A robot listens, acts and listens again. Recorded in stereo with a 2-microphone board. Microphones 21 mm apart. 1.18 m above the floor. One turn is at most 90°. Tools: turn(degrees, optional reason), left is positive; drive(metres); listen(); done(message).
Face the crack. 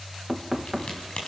turn(degrees=55, reason="The crack: about 55° left or 125° left.")
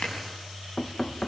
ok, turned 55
turn(degrees=70, reason="So it is at 70° left.")
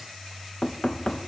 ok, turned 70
done("I heard a crack from this way, but can't make it out now.")